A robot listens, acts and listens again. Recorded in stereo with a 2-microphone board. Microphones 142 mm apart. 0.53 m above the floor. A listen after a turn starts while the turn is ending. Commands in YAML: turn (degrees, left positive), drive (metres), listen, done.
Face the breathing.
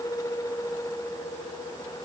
listen: true
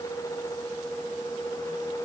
listen: true
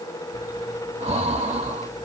turn: -45
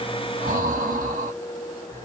turn: -90
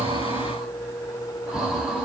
done: "Facing the breathing."